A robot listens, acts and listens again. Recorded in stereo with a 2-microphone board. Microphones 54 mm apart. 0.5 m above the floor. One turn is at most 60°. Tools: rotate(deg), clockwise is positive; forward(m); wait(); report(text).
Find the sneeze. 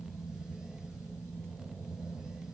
wait()
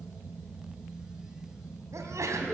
rotate(60)
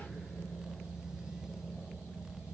rotate(30)
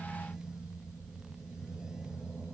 report("I heard a sneeze from this way, but can't make it out now.")